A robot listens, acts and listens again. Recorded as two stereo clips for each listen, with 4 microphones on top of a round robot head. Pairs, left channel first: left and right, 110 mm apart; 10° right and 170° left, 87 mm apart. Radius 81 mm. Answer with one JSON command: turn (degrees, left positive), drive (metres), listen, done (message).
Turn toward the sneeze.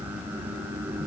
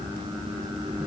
{"listen": true}
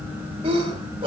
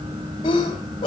{"turn": -45}
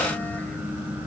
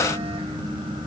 {"done": "I heard a sneeze from this way, but can't make it out now."}